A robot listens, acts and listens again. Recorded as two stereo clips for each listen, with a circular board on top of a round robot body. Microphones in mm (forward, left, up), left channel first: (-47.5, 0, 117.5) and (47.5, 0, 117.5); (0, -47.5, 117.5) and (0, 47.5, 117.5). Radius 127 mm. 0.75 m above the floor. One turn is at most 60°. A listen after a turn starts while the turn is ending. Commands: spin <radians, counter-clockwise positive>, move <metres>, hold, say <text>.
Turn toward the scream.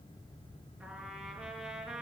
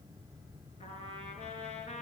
hold
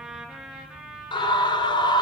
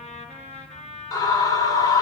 spin -1.05
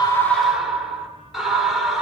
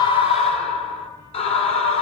spin -1.05
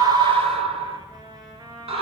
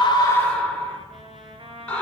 spin -0.17
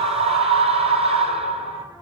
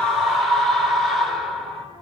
say Found it: a scream, straight ahead, 2 to 4 m away.